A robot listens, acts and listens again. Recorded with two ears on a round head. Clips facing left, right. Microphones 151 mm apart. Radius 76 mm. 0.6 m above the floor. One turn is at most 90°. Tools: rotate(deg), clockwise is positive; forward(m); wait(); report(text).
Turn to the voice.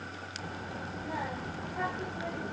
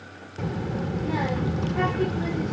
rotate(75)
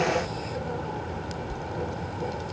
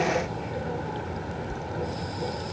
report("Found it: a child speaking, straight ahead.")